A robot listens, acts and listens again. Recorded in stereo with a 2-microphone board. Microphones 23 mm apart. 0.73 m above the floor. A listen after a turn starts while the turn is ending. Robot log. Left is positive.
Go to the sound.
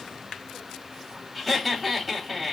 cmd yaw +30
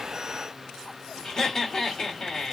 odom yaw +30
note: So it is at 150° left.
cmd yaw +150
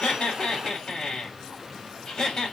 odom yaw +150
note: The laughter is now 35° left.
cmd yaw +35
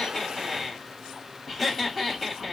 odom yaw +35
cmd fwd 1.0
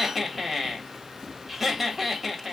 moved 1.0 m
note: The laughter is now 10° right.
cmd yaw -10
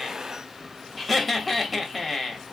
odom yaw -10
cmd fwd 1.0
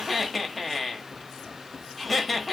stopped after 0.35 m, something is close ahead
end: I am next to the laughter.